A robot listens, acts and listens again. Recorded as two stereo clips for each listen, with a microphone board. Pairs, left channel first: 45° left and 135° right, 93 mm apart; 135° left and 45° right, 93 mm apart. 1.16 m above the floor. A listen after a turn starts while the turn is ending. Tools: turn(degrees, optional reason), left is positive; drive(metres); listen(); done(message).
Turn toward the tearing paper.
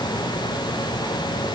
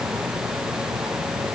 listen()
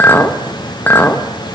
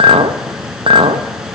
listen()
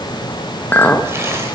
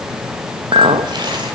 done("I can't make out tearing paper, only a clink.")